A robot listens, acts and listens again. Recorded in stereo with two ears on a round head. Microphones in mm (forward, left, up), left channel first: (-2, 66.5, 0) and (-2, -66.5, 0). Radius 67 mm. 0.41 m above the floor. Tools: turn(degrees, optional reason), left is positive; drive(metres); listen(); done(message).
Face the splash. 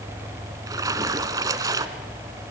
turn(degrees=-25, reason="The splash: about 25° right or 155° right.")
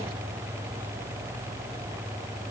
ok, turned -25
listen()
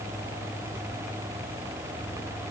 done("I heard a splash, but can't make it out now. It was about straight ahead or 130° right.")